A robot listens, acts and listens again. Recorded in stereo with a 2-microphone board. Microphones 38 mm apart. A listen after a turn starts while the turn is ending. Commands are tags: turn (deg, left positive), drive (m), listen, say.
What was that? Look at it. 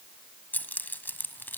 <turn deg="60"/>
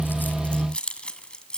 <turn deg="20"/>
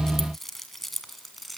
<say>Found it: keys jangling, straight ahead.</say>